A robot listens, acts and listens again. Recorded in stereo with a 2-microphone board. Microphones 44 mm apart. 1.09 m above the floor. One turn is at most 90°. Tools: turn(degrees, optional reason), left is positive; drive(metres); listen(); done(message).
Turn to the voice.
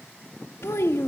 turn(degrees=90)
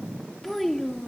done("Found it: a child speaking, straight ahead, 1 to 2 m away.")